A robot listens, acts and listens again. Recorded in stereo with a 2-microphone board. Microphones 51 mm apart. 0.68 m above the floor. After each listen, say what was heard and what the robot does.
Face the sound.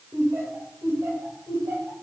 The laughter: about 70° right or 110° right. Turn 70° right.
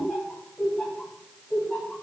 Found it: laughter, straight ahead.